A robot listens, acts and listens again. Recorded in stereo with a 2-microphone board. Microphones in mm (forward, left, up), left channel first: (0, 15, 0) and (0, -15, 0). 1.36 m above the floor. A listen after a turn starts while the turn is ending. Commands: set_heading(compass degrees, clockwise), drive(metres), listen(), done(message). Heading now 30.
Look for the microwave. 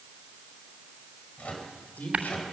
set_heading(335)
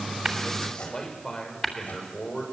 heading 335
set_heading(265)
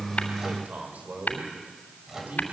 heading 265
set_heading(280)
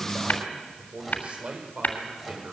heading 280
done("Found it: a microwave, straight ahead, over 4 m away.")